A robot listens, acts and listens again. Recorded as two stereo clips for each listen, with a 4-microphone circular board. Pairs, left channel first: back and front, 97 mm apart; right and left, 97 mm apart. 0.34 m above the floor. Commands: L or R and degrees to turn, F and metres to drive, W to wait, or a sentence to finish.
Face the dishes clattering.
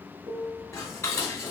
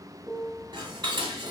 L120
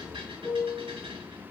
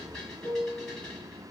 R10
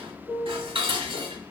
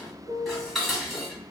Found it: dishes clattering, straight ahead, 1 to 2 m away.